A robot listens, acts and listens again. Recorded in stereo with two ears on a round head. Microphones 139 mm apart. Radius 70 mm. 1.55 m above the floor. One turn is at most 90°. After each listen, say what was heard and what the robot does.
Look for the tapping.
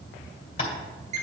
The tapping: about 35° left or 145° left. Turn 35° left.
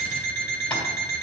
Keep listening.
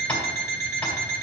So it is at 10° left. Turn 10° left.
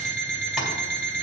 Keep listening.
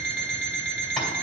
Keep listening.
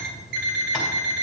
I heard tapping from this way, but can't make it out now.